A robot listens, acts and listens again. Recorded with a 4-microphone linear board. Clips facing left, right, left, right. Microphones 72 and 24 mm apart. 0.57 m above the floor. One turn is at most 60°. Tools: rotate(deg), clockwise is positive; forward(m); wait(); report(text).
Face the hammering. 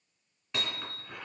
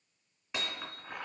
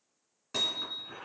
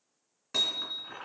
rotate(30)
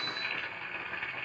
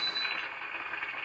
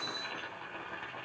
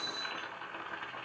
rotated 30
rotate(-25)
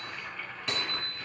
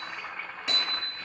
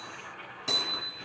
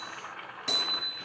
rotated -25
report("Found it: hammering, straight ahead.")